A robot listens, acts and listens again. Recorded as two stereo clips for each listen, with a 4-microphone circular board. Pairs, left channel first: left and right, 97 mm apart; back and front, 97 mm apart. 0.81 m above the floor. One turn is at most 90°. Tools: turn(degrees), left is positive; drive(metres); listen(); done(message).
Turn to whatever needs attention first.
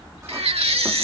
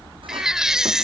turn(degrees=-85)
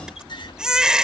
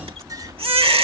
done("Found it: a baby crying, straight ahead.")